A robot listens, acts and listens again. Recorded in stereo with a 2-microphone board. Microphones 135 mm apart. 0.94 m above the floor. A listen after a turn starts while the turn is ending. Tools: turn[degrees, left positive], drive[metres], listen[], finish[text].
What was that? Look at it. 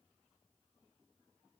Action: listen[]
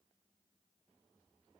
Action: listen[]
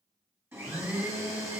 Thought: The blender: about 15° right or 165° right.
Action: turn[-15]
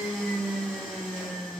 Action: finish[Found it: a blender, straight ahead.]